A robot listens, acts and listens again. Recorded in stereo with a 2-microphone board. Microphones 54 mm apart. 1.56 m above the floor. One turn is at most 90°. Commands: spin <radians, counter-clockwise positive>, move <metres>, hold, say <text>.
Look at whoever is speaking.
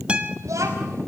spin -1.22
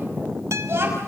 spin -0.87
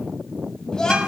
spin 0.17
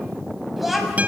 say Found it: a child speaking, straight ahead.